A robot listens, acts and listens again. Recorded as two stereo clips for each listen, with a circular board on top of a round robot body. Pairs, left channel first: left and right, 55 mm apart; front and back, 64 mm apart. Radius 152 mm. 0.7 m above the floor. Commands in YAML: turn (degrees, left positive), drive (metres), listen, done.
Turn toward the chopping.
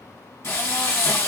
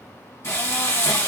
listen: true
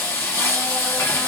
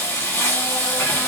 listen: true
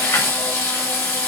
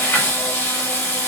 done: "I can't make out chopping to turn to."